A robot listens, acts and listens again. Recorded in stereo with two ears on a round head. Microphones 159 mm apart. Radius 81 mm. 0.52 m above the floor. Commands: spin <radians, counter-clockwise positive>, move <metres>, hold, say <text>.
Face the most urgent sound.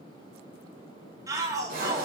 spin -0.35
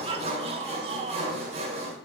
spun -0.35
spin -2.44
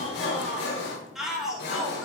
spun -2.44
say Found it: a shout, straight ahead.